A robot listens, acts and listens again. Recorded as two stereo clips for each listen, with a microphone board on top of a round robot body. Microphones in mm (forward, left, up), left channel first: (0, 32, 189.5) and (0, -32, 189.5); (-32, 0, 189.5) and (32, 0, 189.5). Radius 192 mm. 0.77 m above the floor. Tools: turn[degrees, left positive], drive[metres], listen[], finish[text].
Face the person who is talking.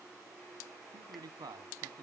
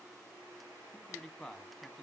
Thought: The man speaking: 90° right.
Action: turn[-90]
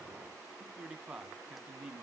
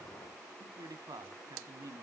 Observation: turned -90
Thought: The man speaking is now 10° right.
Action: turn[-10]
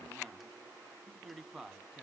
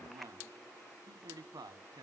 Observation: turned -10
Action: finish[Found it: a man speaking, straight ahead.]